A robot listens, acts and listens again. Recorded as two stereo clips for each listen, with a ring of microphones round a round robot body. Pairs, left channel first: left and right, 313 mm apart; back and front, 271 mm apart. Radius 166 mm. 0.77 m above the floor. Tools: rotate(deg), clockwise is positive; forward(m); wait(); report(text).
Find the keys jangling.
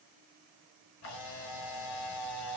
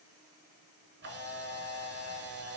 wait()
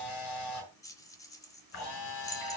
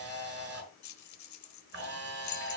rotate(-170)
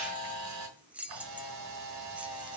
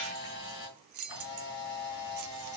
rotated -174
report("Found it: keys jangling, straight ahead.")